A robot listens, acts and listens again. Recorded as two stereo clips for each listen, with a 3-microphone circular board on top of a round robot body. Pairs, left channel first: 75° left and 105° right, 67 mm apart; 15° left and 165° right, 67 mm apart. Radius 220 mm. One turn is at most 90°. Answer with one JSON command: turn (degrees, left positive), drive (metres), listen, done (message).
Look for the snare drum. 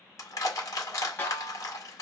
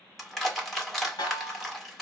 {"turn": 15}
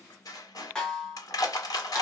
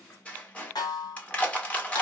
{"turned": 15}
{"done": "Found it: a snare drum, straight ahead, 1 to 2 m away."}